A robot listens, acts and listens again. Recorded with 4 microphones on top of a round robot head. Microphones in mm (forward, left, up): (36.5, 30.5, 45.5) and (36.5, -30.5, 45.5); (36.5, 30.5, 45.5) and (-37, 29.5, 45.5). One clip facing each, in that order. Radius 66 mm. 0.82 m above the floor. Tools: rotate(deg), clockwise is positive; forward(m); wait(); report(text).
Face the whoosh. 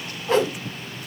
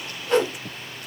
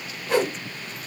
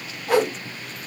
rotate(-155)
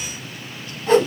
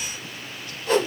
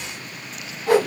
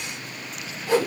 rotate(-30)
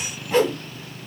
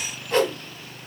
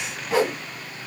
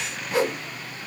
report("Found it: a whoosh, straight ahead, 2 to 4 m away.")